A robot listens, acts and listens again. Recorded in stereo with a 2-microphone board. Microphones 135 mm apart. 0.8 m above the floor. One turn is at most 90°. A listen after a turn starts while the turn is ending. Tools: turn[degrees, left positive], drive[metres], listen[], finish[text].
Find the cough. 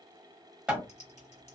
Action: listen[]
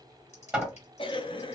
Thought: The cough: about 40° left or 140° left.
Action: turn[40]
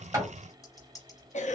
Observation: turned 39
Thought: So it is at 100° left.
Action: turn[90]
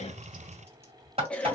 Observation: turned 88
Thought: The cough is now 10° left.
Action: turn[10]
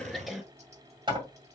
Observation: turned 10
Action: finish[Facing the cough, under 1 m away.]